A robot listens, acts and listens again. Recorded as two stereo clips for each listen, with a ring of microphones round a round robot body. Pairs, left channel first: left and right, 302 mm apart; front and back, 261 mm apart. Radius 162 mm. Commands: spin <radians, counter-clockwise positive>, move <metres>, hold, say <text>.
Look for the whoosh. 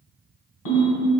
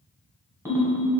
hold
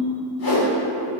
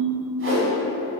spin 2.44
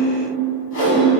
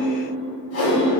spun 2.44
spin 0.70
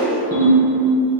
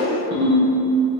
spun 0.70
hold
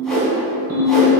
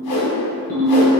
say Facing the whoosh.